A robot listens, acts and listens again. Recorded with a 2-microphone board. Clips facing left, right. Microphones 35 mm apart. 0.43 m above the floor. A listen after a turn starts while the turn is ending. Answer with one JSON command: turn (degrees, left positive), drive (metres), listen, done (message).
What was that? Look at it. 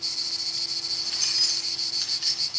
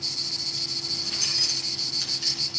{"turn": 30}
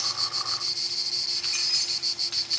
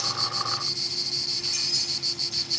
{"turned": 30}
{"turn": 135}
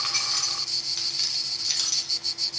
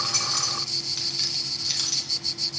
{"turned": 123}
{"done": "Facing the keys jangling, 2 to 4 m away."}